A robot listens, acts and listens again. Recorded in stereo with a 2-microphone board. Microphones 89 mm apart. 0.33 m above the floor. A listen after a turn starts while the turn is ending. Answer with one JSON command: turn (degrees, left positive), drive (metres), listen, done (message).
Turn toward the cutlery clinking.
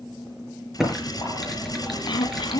{"turn": 50}
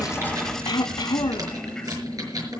{"listen": true}
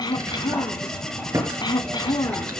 {"done": "Facing the cutlery clinking, over 4 m away."}